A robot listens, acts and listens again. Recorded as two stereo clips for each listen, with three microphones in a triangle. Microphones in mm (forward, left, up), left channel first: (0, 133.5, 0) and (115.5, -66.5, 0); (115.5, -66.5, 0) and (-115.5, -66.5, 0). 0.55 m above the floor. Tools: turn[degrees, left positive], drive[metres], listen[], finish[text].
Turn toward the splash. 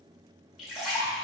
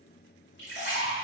Thought: The splash: 30° left.
Action: turn[30]
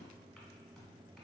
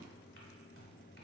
Action: finish[Facing where the splash came from. I can't hear it now.]